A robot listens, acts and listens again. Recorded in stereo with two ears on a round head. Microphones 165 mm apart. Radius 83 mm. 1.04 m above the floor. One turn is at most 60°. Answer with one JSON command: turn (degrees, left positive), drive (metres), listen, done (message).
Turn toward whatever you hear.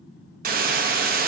{"turn": -45}
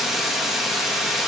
{"done": "Facing the hiss, under 1 m away."}